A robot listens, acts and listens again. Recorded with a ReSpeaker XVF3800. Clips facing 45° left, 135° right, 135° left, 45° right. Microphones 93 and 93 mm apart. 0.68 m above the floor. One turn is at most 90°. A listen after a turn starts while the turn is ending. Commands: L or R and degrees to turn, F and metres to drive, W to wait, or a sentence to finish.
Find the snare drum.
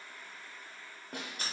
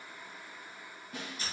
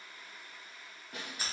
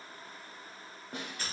L15
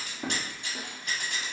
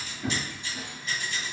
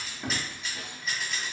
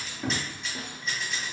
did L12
W
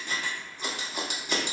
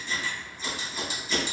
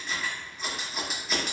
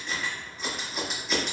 W
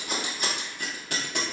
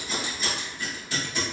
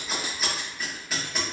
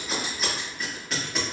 Facing where the snare drum came from. I can't hear it now.